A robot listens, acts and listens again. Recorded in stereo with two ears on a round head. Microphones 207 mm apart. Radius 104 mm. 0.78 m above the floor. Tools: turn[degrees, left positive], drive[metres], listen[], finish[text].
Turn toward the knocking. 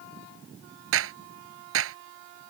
Action: listen[]
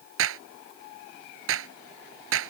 Action: listen[]
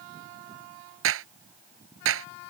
Action: finish[I can't make out knocking, only a clap.]